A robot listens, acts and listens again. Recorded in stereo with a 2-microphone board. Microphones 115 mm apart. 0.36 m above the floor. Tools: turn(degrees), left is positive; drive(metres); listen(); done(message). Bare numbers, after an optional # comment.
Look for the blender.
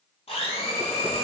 # The blender: about 60° left or 120° left.
turn(60)
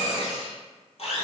# So it is at 60° left.
turn(60)
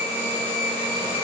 # The blender is now 20° left.
turn(20)
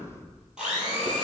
# The blender is now 10° right.
turn(-10)
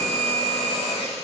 done("Facing the blender.")